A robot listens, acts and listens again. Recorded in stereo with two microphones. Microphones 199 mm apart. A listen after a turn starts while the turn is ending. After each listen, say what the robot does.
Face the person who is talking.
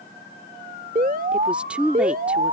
Turn 30° right.
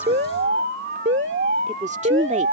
Turn 140° right.
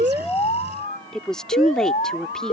Found it: a woman speaking, straight ahead.